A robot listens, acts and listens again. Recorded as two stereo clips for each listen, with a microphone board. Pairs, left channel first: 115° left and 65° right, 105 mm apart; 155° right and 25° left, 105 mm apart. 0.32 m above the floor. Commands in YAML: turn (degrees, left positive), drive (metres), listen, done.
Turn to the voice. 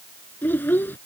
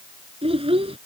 turn: 40
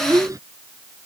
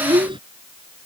turn: -10
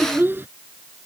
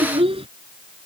done: "Facing the child speaking."